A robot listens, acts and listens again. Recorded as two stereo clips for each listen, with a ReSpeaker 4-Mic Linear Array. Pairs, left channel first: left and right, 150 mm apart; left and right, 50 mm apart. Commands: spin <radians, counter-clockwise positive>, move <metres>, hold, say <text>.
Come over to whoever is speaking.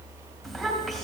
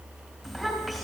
spin 0.52
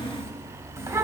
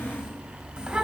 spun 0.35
spin -0.35
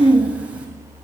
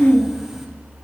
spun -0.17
spin -0.17
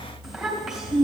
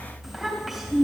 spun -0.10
move 1.0
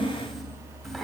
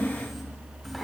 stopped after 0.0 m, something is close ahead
say Blocked. The child speaking is further on, straight ahead.